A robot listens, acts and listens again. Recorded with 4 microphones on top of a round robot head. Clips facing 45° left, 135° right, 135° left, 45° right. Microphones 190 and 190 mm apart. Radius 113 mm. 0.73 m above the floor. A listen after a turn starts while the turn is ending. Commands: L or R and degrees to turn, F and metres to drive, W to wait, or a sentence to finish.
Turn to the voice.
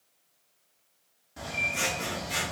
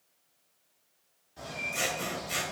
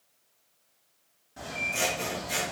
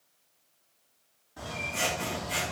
W
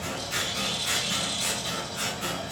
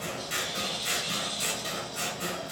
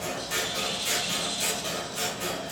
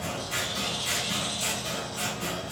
W
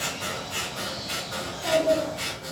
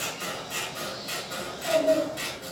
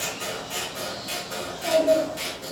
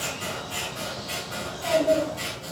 L50
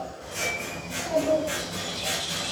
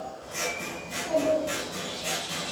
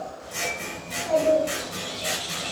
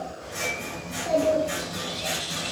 R10
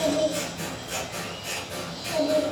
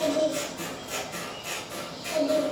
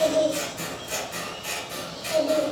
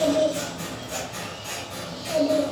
Facing the child speaking, 1 to 2 m away.